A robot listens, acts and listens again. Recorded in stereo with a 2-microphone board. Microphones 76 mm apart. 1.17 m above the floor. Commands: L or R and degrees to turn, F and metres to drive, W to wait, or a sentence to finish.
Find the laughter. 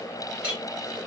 W
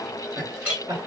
R45
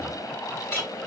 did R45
W
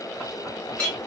W
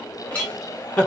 L25
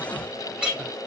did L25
W
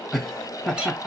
L10
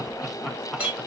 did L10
Facing the laughter.